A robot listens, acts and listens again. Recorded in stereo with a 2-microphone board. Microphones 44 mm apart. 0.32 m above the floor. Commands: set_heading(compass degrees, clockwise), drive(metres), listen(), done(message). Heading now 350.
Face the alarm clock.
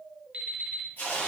set_heading(25)
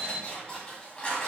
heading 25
set_heading(130)
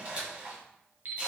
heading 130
set_heading(175)
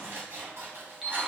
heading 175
done("Facing the alarm clock.")